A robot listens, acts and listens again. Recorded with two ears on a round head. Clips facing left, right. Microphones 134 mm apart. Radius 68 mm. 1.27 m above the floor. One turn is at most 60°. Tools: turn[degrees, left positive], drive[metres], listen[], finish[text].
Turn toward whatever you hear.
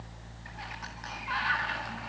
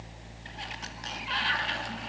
Thought: The sliding door: about 30° right or 150° right.
Action: turn[-30]
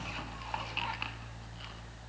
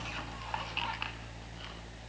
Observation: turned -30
Action: listen[]
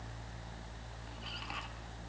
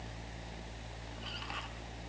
Action: listen[]
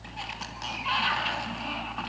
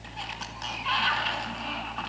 Action: finish[Facing the sliding door.]